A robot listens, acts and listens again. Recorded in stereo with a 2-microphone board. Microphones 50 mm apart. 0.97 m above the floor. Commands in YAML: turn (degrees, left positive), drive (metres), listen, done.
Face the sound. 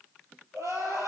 turn: -90
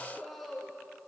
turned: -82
done: "Facing the crying."